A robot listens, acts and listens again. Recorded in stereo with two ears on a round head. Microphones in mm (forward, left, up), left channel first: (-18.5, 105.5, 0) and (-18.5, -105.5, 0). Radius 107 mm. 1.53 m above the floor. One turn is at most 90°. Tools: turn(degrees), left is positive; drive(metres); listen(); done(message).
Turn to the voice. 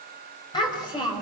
turn(degrees=15)
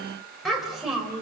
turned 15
turn(degrees=-30)
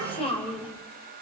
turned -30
turn(degrees=20)
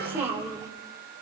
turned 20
turn(degrees=-10)
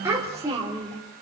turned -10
turn(degrees=-20)
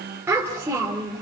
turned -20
turn(degrees=-10)
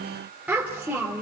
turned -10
done("Facing the child speaking.")